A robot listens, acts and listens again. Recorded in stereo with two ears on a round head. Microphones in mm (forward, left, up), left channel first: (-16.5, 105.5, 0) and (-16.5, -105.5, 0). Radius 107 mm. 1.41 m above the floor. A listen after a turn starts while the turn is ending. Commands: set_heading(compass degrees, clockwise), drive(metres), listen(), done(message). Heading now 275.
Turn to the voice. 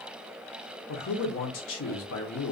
set_heading(215)
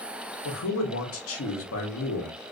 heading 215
set_heading(155)
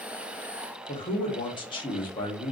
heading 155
set_heading(135)
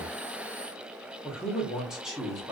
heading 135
done("Facing the man speaking.")